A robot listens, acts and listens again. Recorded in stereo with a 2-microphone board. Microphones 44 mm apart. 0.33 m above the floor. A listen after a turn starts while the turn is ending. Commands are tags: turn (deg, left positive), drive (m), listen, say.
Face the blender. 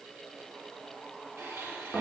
<turn deg="-55"/>
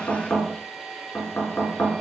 <say>Facing the blender, over 4 m away.</say>